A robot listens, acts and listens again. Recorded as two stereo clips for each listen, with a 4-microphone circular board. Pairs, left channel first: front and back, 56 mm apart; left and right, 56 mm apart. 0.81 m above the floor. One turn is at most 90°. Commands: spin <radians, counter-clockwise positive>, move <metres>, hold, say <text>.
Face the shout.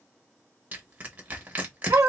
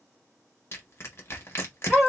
hold
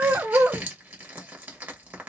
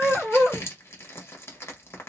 hold
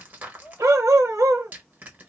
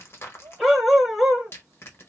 spin -1.05
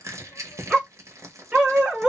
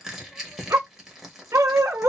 hold
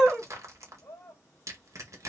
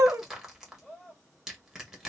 say Facing the shout, 1 to 2 m away.